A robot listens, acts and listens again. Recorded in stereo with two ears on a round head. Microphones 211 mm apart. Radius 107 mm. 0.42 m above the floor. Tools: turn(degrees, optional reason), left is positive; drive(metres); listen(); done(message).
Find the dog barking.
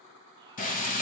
listen()
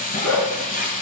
turn(degrees=90)
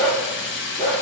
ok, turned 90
done("Facing the dog barking.")